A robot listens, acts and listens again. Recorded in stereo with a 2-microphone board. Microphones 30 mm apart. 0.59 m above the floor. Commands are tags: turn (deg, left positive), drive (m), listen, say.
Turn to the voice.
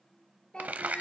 <turn deg="30"/>
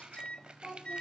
<say>Found it: a child speaking, straight ahead, over 4 m away.</say>